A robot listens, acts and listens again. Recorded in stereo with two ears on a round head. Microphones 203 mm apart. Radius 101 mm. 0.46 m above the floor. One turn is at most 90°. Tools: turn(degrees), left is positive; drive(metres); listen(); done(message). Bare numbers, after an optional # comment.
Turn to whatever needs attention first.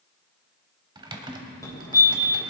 # The fire alarm: about 15° left or 165° left.
turn(15)
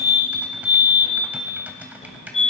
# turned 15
# So it is at 155° left.
turn(90)
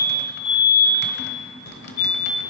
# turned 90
# The fire alarm is now 90° left.
turn(90)
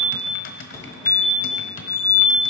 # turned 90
# The fire alarm is now 20° left.
turn(20)
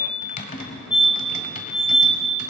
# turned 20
done("Facing the fire alarm, 2 to 4 m away.")